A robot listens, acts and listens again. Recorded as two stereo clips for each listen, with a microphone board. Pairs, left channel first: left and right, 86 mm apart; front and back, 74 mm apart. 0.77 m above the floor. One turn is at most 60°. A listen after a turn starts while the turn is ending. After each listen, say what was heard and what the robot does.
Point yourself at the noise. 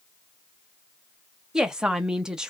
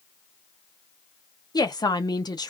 The woman speaking: 10° right. Turn 10° right.
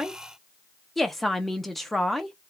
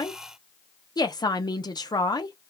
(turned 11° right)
Facing the woman speaking.